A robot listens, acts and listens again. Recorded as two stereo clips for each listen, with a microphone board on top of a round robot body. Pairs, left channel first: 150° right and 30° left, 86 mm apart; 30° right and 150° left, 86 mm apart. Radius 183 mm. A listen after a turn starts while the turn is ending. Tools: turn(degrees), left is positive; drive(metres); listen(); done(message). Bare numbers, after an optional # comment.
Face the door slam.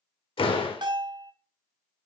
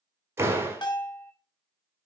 # The door slam: 150° right.
turn(-150)
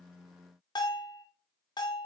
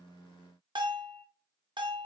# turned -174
# Nothing new. It was at 25° left.
turn(25)
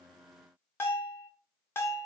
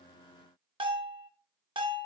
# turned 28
done("Facing where the door slam came from. I can't hear it now.")